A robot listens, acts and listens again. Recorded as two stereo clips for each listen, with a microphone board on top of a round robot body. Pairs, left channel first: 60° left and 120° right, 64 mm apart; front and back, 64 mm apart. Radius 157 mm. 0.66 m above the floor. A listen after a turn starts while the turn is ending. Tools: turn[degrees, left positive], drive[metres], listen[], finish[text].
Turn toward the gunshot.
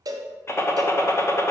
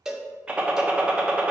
Thought: The gunshot: 105° left.
Action: turn[105]
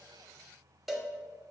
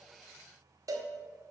Action: finish[Facing where the gunshot came from. I can't hear it now.]